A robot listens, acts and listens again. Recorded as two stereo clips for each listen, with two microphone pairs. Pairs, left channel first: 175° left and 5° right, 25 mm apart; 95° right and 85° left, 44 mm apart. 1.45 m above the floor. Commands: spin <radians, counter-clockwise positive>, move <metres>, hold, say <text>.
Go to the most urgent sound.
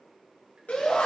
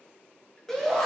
spin -3.05
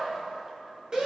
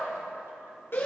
spin -1.05
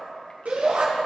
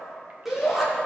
move 1.0
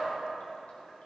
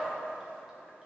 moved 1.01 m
hold
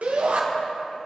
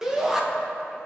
move 1.0
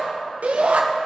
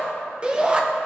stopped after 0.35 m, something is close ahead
spin 0.26
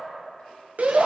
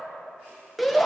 say Arrived at the shout, straight ahead.